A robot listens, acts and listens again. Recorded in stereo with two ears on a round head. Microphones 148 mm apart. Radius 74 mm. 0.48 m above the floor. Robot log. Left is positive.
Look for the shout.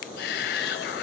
note: The shout: about 65° left or 115° left.
cmd yaw +65
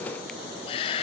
note: So it is at 35° left.
cmd yaw +35
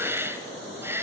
note: The shout is now 15° right.
cmd yaw -15
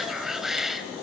end: Found it: a shout, straight ahead, 2 to 4 m away.